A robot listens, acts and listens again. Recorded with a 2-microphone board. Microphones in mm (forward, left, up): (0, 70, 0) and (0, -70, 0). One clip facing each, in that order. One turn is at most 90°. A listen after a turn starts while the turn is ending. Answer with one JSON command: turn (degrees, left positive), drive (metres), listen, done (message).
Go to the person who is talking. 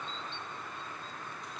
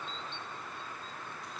{"listen": true}
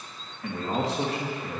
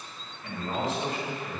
{"turn": 90}
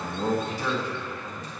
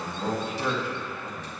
{"turn": -10}
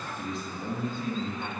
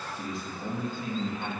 {"drive": 1.0}
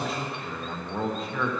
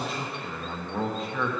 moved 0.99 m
{"drive": 1.0}
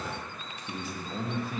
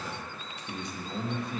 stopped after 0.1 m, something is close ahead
{"done": "I am next to the man speaking."}